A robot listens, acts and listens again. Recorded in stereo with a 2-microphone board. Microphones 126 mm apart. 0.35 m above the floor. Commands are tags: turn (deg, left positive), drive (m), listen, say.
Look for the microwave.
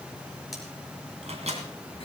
<turn deg="-65"/>
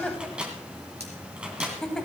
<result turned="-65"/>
<turn deg="-10"/>
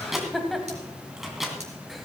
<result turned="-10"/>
<say>Found it: a microwave, straight ahead.</say>